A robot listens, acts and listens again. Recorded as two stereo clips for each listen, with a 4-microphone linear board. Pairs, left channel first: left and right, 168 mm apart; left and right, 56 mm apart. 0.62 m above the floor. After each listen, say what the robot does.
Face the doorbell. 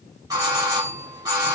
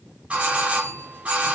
Turn 20° right.
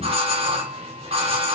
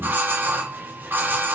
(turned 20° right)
Turn 135° right.
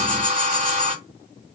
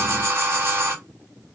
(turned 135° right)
Turn 60° right.
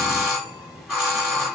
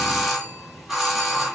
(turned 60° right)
Found it: a doorbell, straight ahead.